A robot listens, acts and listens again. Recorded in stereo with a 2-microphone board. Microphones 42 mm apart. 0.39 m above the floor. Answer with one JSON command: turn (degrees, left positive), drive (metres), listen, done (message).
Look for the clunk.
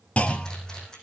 {"turn": 30}
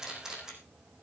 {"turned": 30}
{"listen": true}
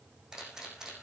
{"done": "I heard a clunk, but can't make it out now. It was about straight ahead or 120° left."}